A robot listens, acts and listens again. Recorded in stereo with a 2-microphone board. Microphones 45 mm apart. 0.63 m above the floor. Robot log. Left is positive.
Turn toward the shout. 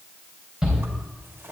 cmd yaw -30
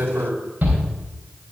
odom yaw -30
note: So it is at 135° right.
cmd yaw -135
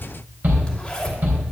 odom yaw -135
note: The shout is now 45° right.
cmd yaw -45
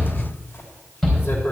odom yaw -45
note: The shout is now 10° left.
cmd yaw +10
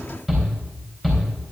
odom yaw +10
end: Found it: a shout, straight ahead, 2 to 4 m away.